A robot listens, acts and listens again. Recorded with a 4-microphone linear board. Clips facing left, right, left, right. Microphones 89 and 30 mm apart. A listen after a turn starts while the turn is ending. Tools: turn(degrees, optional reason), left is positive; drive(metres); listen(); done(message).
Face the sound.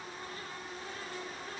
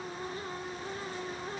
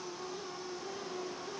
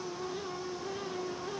listen()
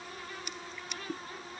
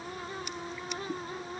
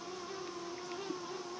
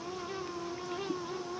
listen()
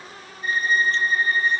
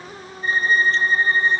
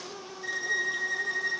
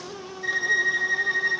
turn(degrees=-30, reason="The violin: about 30° right or 150° right.")
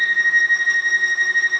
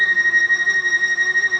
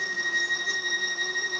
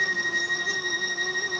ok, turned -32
done("Facing the violin, under 1 m away.")